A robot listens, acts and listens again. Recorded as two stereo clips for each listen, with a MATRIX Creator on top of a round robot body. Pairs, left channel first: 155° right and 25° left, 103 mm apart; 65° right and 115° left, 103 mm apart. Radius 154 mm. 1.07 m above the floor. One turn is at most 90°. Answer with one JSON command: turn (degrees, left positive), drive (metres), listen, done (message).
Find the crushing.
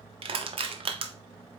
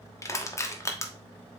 {"done": "Facing the crushing."}